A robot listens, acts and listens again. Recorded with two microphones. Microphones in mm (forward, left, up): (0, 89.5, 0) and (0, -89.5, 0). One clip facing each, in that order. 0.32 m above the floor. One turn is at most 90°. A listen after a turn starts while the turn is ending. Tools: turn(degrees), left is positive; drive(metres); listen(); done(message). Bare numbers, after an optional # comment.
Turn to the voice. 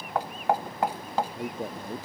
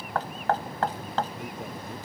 # The man speaking: about 35° left or 145° left.
turn(35)
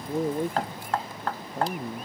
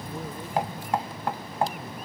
# So it is at 110° left.
turn(90)
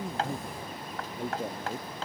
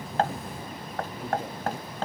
# The man speaking is now 30° left.
turn(30)
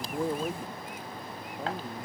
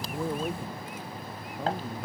listen()
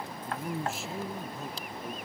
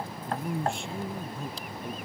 done("Facing the man speaking.")